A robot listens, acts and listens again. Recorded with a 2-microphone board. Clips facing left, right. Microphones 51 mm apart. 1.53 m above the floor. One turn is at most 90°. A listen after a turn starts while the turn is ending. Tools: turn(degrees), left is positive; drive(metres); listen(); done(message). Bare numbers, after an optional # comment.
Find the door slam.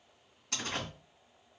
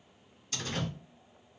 turn(90)
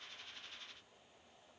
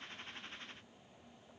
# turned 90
done("I heard a door slam from this way, but can't make it out now.")